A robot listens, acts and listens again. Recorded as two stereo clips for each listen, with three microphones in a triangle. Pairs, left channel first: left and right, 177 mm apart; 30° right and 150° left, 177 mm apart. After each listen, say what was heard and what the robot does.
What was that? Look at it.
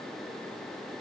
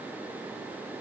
Keep listening.
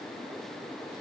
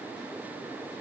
Keep listening.
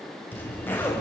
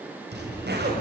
The zipper: 170° left. Turn 170° left.
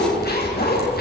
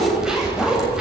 The zipper is now 65° left. Turn 65° left.
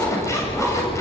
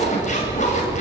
The zipper is now 15° left. Turn 15° left.
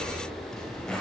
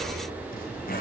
Facing the zipper.